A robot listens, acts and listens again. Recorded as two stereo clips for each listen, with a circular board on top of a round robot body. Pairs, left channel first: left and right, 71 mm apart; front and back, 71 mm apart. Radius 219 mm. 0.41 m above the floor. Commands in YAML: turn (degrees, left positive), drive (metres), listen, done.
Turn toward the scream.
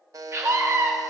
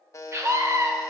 turn: -140
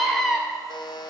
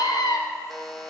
done: "Facing the scream."